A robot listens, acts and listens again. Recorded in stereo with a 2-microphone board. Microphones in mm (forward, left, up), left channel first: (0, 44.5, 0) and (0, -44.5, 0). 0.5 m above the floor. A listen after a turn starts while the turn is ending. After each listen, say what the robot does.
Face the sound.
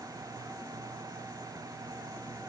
Keep listening.
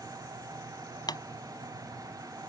Turn 50° left.
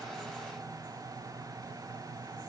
Keep listening.
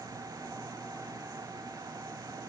I heard a pop, but can't make it out now. It was about straight ahead or 80° left.